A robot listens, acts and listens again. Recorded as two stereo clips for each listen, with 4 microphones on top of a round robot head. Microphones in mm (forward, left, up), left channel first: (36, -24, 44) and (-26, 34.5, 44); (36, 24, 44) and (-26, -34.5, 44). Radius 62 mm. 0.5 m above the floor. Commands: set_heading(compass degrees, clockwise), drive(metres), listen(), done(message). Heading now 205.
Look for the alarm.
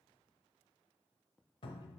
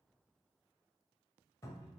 listen()
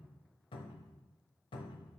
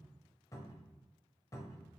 listen()
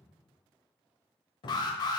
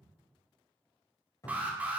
set_heading(270)
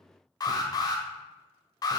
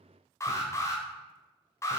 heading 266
set_heading(276)
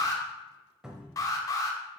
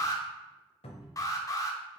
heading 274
done("Found it: an alarm, straight ahead.")